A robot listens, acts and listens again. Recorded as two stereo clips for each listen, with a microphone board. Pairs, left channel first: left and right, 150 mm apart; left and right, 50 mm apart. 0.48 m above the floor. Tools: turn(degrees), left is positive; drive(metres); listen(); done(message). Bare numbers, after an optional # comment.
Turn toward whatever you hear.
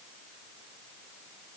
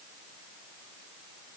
listen()
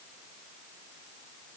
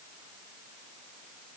listen()
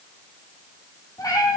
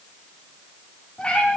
# The cat meowing: about 25° left or 155° left.
turn(25)
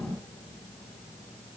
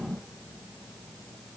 listen()
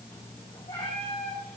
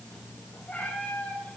# The cat meowing: about 40° left or 140° left.
turn(40)
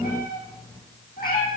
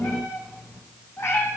# So it is at 100° left.
turn(100)
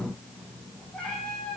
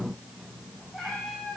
done("Facing the cat meowing, 2 to 4 m away.")